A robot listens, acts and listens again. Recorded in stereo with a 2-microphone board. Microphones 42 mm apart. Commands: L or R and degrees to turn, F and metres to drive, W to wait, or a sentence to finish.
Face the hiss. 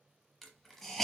L30
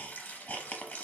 L145
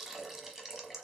R10
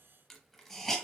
Found it: a hiss, straight ahead, under 1 m away.